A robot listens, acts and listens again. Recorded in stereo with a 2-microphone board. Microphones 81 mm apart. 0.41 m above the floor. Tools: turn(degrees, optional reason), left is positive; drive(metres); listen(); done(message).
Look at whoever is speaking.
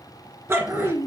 turn(degrees=50, reason="The child speaking: about 50° left or 130° left.")
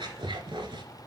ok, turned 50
listen()
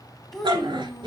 done("Found it: a child speaking, straight ahead, 2 to 4 m away.")